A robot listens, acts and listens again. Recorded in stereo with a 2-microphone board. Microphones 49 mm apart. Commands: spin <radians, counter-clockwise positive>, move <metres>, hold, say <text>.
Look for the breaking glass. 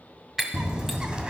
spin -0.52
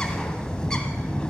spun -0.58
hold
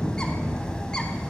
say I heard breaking glass, but can't make it out now. It was about 25° left or 140° right.